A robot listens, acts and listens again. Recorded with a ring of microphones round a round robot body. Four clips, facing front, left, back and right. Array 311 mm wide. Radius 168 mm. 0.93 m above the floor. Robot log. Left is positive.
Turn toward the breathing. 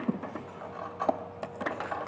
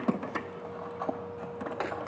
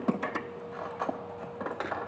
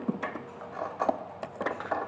cmd idle
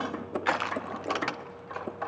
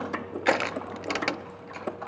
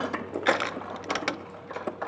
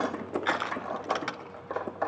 cmd idle
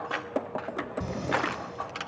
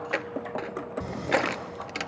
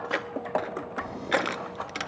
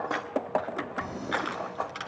note: The breathing: 30° left.
cmd yaw +30
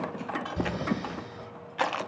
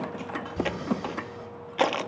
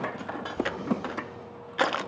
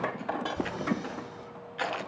note: The breathing is now 20° left.
cmd yaw +20
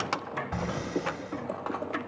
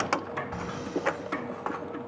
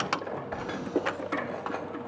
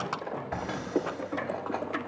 end: Found it: breathing, straight ahead.